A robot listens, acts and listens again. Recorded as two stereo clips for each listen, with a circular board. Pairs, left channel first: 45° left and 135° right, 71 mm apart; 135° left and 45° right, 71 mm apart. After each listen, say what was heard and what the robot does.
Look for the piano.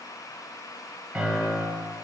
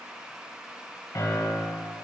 The piano: 150° left. Turn 150° left.
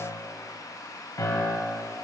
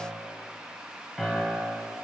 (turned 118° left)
The piano is now 35° left. Turn 35° left.
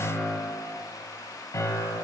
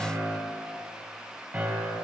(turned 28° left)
Found it: a piano, straight ahead, 2 to 4 m away.